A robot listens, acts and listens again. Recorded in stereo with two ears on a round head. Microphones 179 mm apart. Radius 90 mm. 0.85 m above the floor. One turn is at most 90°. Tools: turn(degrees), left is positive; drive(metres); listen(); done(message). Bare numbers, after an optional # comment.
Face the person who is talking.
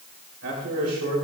turn(-90)
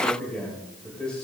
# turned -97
done("Facing the man speaking, 2 to 4 m away.")